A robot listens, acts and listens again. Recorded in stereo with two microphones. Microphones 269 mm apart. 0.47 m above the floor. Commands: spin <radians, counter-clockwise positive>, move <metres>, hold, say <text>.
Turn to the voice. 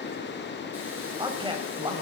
spin -0.35
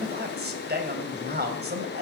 spin -2.44
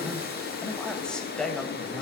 say Found it: a man speaking, straight ahead.